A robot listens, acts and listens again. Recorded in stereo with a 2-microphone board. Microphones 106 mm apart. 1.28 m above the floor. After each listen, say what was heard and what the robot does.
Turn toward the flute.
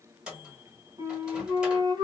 The flute: about 40° right or 140° right. Turn 40° right.
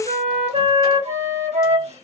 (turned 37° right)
So it is at 100° right. Turn 100° right.
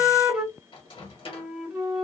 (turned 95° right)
Facing the flute.